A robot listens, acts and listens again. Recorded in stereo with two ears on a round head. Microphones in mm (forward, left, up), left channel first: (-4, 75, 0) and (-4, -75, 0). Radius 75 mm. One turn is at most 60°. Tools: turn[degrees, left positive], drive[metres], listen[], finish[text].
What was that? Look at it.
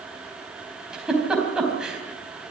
Action: turn[-30]
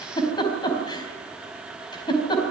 Thought: So it is at 25° left.
Action: turn[25]
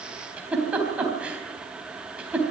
Thought: The giggle is now 10° right.
Action: turn[-10]
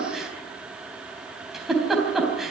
Action: finish[Found it: a giggle, straight ahead, 2 to 4 m away.]